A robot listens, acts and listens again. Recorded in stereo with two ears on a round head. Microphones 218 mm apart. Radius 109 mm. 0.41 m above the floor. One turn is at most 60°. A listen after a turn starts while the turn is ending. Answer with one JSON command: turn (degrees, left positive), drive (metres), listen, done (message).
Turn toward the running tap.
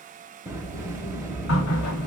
{"turn": 60}
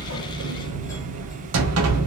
{"listen": true}
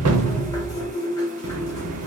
{"turn": 15}
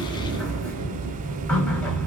{"done": "Found it: a running tap, straight ahead."}